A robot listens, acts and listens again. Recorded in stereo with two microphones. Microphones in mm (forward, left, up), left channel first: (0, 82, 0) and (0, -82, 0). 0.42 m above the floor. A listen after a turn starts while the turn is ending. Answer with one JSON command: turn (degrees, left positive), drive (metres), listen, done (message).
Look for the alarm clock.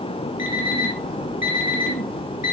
{"turn": 55}
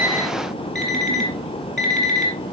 {"done": "Found it: an alarm clock, straight ahead."}